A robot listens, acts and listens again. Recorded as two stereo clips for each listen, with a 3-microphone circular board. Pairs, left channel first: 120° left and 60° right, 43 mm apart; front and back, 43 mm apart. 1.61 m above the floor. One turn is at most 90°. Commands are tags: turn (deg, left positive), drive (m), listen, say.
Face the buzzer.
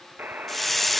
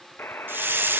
<turn deg="-20"/>
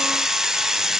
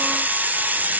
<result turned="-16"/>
<listen/>
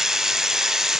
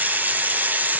<listen/>
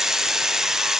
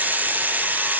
<say>Facing where the buzzer came from. I can't hear it now.</say>